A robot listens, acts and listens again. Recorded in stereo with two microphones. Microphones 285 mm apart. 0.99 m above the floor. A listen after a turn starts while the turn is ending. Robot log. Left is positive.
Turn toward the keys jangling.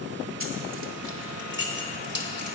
note: The keys jangling: about 40° right or 140° right.
cmd yaw -40
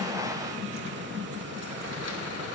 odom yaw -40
cmd idle
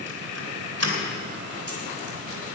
note: So it is at 120° right.
cmd yaw -120
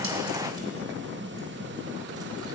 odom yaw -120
cmd idle
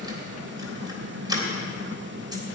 note: The keys jangling is now 15° right.
cmd yaw -15
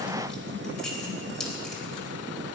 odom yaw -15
end: Facing the keys jangling.